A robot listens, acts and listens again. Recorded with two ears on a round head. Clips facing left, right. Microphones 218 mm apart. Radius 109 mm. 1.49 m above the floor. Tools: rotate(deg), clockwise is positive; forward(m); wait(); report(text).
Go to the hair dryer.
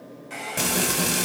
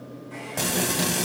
rotate(-90)
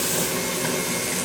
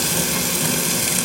wait()
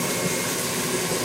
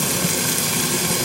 wait()
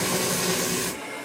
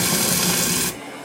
forward(1.0)
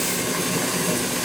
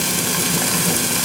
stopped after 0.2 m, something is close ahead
wait()
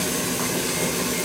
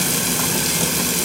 wait()
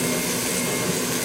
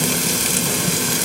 report("Facing where the hair dryer came from. I can't hear it now. I did not reach it.")